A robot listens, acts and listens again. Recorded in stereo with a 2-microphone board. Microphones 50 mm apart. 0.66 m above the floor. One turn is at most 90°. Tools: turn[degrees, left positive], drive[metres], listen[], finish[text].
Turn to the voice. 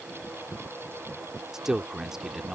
Action: turn[-30]
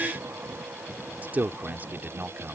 Thought: So it is at 140° right.
Action: turn[-90]
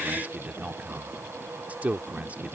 Thought: The man speaking is now 35° right.
Action: turn[-35]
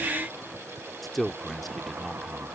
Action: finish[Facing the man speaking.]